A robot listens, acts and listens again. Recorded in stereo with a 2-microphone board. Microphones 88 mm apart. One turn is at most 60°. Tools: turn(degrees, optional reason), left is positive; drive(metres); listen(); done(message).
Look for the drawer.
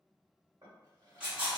turn(degrees=-45, reason="The drawer: about 45° right or 135° right.")
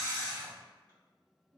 turn(degrees=-60, reason="So it is at 85° right.")
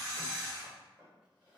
turn(degrees=-15, reason="The drawer is now 15° right.")
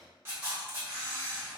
done("Found it: a drawer, straight ahead, 1 to 2 m away.")